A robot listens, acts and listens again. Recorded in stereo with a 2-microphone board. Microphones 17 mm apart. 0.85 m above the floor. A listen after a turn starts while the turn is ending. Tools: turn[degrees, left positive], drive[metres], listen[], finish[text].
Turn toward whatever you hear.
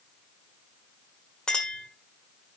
Thought: The clink: about 55° left or 125° left.
Action: turn[55]
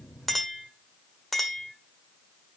Action: finish[Facing the clink, 1 to 2 m away.]